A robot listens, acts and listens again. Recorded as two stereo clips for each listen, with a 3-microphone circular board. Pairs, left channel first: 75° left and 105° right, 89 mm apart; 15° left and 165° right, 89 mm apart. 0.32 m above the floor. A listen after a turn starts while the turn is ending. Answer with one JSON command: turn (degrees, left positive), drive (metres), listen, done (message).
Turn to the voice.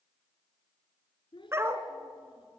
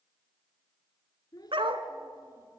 {"turn": 55}
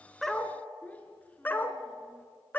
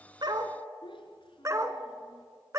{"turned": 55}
{"done": "Found it: a child speaking, straight ahead, 2 to 4 m away."}